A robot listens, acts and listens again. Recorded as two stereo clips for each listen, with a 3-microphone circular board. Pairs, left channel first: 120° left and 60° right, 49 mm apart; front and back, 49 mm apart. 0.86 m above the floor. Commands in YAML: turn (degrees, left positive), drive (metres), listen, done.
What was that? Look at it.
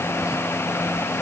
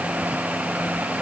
listen: true
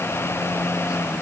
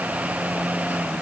listen: true
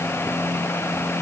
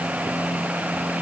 done: "I can't make out anything."